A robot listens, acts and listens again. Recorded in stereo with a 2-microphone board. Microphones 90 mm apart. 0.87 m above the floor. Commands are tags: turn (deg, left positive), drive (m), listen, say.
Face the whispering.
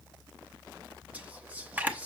<turn deg="-15"/>
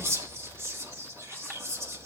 <turn deg="-150"/>
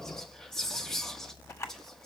<say>Facing the whispering.</say>